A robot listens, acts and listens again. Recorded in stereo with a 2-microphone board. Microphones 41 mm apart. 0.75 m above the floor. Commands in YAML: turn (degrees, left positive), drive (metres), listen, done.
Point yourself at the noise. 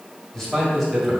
turn: 30
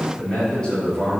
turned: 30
turn: 165
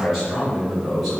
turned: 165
done: "Facing the man speaking, 2 to 4 m away."